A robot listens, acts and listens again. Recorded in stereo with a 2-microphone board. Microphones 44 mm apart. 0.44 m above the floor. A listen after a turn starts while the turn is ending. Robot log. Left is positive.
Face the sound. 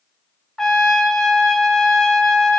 cmd yaw +30
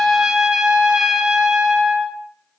note: So it is at 15° right.
cmd yaw -15
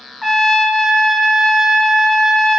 end: Found it: a trumpet, straight ahead.